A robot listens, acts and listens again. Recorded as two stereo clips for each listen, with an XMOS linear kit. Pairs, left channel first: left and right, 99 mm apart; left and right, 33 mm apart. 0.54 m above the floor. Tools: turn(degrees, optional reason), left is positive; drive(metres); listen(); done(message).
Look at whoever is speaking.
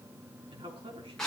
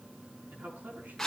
turn(degrees=-90)
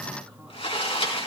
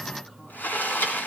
listen()
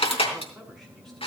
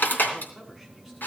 done("Found it: a man speaking, straight ahead, over 4 m away.")